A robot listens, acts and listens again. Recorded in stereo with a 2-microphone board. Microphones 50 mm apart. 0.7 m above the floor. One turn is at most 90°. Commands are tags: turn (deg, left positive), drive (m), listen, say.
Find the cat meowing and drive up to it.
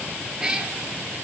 <turn deg="-15"/>
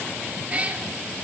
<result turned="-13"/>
<turn deg="-90"/>
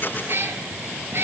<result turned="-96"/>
<turn deg="-55"/>
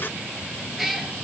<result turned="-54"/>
<drive m="1.0"/>
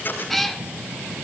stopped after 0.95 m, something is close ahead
<say>I am next to the cat meowing.</say>